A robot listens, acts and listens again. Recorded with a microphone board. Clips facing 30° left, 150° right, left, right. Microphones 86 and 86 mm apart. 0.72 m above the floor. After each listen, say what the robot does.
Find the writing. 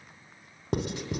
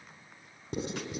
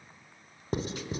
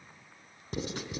Turn 45° left.
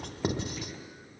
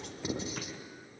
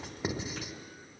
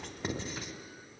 Turn 10° left.
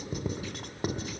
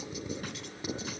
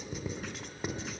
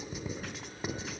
Found it: writing, straight ahead, 1 to 2 m away.